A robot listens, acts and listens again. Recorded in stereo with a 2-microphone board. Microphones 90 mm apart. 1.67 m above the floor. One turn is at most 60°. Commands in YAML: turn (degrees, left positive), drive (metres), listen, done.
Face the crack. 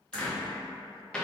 turn: 40
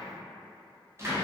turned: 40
listen: true
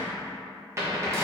done: "I heard a crack, but can't make it out now. It was about straight ahead or 100° left."